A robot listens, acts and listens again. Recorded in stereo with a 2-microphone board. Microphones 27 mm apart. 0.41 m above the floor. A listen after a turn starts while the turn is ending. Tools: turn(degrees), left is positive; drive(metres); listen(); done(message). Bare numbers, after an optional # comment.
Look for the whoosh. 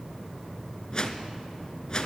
# The whoosh: about 35° left or 145° left.
turn(35)
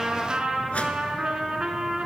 listen()
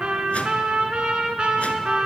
listen()
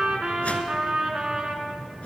# So it is at 110° left.
turn(110)
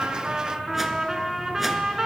listen()
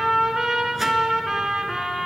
listen()
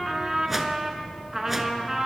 done("Facing where the whoosh came from. I can't hear it now.")